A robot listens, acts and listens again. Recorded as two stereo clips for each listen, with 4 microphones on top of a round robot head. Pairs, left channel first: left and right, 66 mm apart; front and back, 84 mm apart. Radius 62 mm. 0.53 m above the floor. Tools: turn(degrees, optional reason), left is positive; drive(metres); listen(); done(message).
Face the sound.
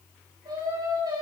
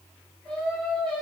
turn(degrees=-80, reason="The singing: 80° right.")
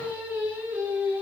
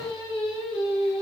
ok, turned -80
turn(degrees=-25, reason="The singing is now 25° right.")
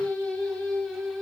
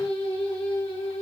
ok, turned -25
turn(degrees=10, reason="The singing is now 10° left.")
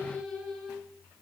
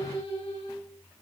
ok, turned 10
done("Found it: singing, straight ahead, over 4 m away.")